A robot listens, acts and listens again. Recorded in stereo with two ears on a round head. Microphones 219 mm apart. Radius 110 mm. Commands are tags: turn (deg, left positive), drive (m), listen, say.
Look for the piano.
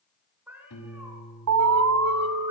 <turn deg="90"/>
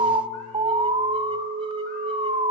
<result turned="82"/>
<turn deg="10"/>
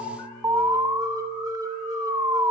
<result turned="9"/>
<listen/>
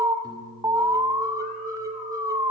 <turn deg="-15"/>
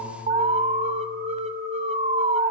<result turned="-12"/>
<listen/>
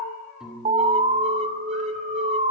<say>Facing the piano, over 4 m away.</say>